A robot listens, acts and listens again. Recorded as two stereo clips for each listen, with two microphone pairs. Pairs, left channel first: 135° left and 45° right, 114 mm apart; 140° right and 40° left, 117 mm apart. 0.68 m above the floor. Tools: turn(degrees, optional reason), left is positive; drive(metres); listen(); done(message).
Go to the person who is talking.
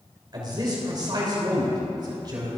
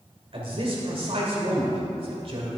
turn(degrees=10, reason="The man speaking: 10° left.")
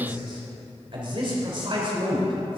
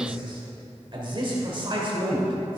drive(metres=1.0)
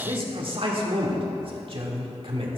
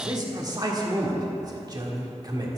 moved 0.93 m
turn(degrees=-10, reason="The man speaking is now 10° right.")
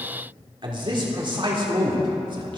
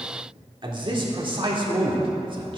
drive(metres=1.0)
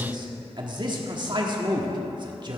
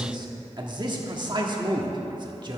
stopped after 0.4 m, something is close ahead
done("Arrived at the man speaking, straight ahead.")